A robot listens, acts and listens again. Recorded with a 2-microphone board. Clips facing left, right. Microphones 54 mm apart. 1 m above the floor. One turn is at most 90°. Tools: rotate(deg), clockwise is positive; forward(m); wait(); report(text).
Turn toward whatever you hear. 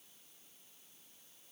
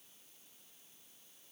wait()
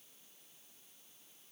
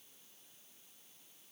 wait()
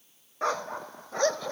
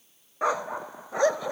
rotate(30)
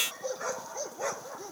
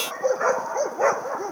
rotate(90)
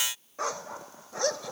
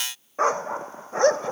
rotate(35)
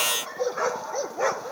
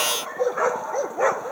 rotate(15)
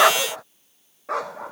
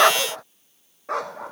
report("Found it: a dog barking, straight ahead.")